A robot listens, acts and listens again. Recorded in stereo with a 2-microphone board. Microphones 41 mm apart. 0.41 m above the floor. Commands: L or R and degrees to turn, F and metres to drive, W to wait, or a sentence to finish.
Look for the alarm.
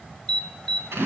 L30
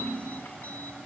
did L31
W
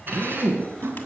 W
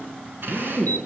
I heard an alarm, but can't make it out now. It was about 20° right or 140° left.